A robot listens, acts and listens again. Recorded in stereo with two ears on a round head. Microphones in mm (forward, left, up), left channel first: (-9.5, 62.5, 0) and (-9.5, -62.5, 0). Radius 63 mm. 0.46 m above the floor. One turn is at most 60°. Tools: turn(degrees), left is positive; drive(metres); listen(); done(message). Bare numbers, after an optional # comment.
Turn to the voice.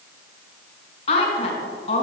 # The woman speaking: about 45° left or 135° left.
turn(45)
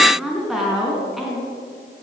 done("Facing the woman speaking.")